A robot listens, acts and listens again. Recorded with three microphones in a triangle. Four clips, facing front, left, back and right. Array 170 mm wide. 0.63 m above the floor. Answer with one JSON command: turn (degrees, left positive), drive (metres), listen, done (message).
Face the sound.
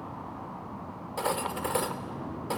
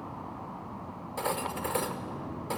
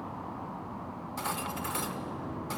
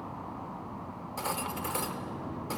{"turn": 25}
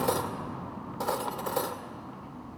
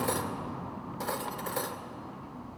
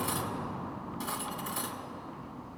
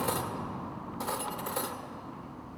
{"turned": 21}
{"done": "Found it: cutlery clinking, straight ahead, 1 to 2 m away."}